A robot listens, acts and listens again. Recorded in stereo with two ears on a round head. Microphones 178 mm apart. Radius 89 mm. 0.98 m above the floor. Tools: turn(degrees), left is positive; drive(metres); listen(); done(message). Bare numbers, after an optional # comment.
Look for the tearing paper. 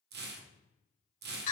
# The tearing paper: about 55° right or 125° right.
turn(-55)
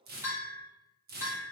# So it is at 55° right.
turn(-55)
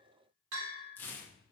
# The tearing paper is now 10° left.
turn(10)
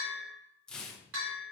done("Facing the tearing paper.")